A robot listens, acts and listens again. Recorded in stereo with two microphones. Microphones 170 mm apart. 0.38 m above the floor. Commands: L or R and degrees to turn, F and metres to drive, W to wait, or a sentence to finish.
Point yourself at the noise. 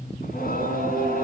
L60
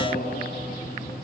L55
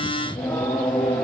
Found it: singing, straight ahead, over 4 m away.